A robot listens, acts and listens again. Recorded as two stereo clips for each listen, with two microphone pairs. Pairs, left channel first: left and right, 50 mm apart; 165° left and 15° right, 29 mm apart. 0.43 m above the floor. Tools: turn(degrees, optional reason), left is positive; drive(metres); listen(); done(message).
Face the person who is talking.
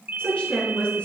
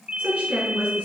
turn(degrees=25, reason="The woman speaking: 25° left.")
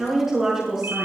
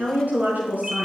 turn(degrees=-10, reason="The woman speaking is now 10° right.")
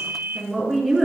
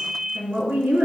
done("Found it: a woman speaking, straight ahead, over 4 m away.")